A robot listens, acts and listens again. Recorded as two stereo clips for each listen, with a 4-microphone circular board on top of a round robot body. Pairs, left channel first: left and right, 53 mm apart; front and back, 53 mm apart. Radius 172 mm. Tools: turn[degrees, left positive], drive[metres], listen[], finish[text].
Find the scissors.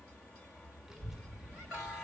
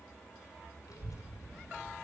Action: listen[]
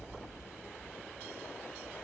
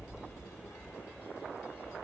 Action: listen[]
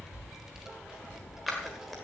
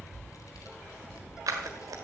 Thought: The scissors: straight behind.
Action: turn[180]
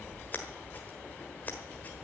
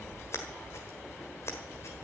Thought: The scissors is now 30° left.
Action: turn[30]
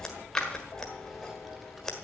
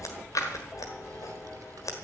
Thought: The scissors is now 10° left.
Action: turn[10]
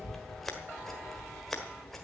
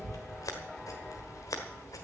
Action: finish[Facing the scissors.]